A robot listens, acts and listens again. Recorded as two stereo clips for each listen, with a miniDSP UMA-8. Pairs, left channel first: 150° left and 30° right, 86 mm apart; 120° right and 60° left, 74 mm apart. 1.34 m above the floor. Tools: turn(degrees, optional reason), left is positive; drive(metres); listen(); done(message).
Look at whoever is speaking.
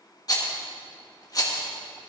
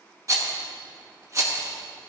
listen()
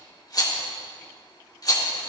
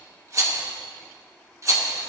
listen()
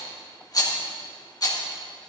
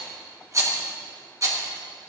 done("I can't make out anyone speaking to turn to.")